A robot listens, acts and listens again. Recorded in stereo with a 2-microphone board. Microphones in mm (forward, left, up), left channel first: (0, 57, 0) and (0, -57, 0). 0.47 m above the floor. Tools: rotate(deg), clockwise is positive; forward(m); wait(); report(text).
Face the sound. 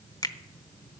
rotate(-35)
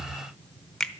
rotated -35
report("Found it: a finger snap, straight ahead.")